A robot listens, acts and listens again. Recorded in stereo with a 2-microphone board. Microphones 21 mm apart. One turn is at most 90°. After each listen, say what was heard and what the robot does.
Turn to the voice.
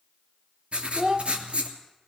The child speaking: about 40° right or 140° right. Turn 40° right.
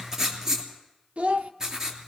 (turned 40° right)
So it is at 95° right. Turn 90° right.
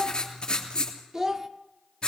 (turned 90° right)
The child speaking is now 30° right. Turn 30° right.
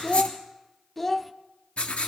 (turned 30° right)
Facing the child speaking.